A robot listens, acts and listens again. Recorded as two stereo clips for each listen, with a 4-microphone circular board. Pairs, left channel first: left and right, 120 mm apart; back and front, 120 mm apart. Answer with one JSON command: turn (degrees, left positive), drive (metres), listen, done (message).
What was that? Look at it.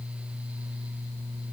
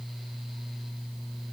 {"listen": true}
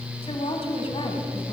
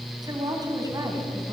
{"turn": 55}
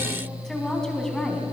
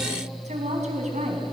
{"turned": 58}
{"done": "Facing the woman speaking."}